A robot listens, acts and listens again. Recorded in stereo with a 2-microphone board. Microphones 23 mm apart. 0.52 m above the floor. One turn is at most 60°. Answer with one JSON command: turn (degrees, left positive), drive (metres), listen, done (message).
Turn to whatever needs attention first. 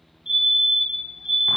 {"turn": -50}
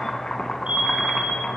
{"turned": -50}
{"turn": -60}
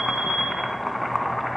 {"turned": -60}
{"turn": -25}
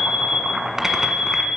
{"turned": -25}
{"turn": -10}
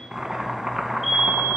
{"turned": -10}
{"done": "Facing the fire alarm."}